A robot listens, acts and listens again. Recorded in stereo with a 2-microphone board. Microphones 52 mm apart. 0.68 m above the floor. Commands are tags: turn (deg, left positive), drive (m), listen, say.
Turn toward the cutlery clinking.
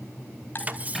<turn deg="-30"/>
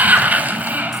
<listen/>
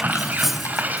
<say>Facing the cutlery clinking, under 1 m away.</say>